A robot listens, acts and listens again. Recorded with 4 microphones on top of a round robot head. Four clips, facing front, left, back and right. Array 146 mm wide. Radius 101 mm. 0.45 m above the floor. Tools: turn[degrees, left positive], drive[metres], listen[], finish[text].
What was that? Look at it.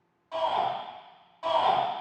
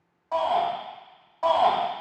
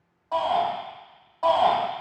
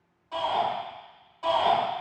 Thought: The shout: 135° left.
Action: turn[135]
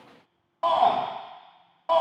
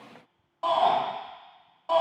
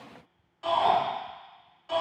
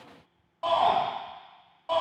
Action: finish[Facing the shout.]